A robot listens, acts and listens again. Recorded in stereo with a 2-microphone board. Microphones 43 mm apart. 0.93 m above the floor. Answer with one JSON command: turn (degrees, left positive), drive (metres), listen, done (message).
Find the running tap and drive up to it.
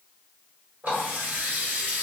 {"turn": -35}
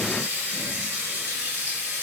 {"turn": -110}
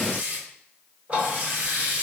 {"turn": -40}
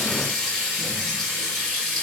{"turn": 10}
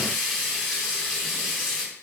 {"drive": 1.0}
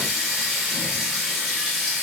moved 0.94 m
{"drive": 1.0}
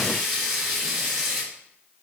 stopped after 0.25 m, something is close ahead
{"done": "I am next to the running tap."}